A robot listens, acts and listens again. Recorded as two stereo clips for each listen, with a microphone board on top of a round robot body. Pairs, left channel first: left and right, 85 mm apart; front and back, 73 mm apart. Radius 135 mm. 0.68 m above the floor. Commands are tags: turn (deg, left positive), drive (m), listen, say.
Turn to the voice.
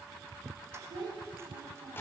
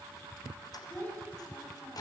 <turn deg="-60"/>
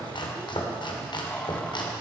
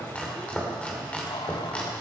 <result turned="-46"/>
<turn deg="-15"/>
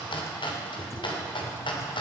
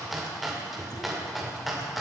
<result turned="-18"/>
<listen/>
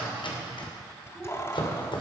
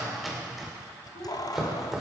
<say>Facing the child speaking.</say>